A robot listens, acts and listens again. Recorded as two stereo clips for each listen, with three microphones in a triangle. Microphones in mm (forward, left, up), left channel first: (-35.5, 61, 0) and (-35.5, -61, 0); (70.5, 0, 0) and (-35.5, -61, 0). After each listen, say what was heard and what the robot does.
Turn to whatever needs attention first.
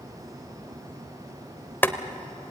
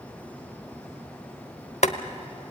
Keep listening.
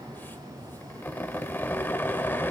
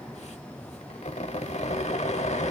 Keep listening.
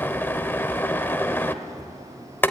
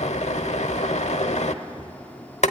I can't make out anything urgent to turn to.